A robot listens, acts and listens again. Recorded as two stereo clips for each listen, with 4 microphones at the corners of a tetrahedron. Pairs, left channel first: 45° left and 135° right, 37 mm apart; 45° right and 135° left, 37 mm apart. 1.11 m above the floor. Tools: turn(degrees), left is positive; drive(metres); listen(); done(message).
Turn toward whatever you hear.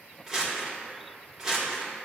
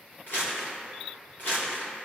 turn(degrees=-60)
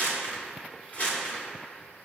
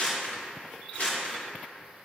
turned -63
done("Facing the crumpling, 2 to 4 m away.")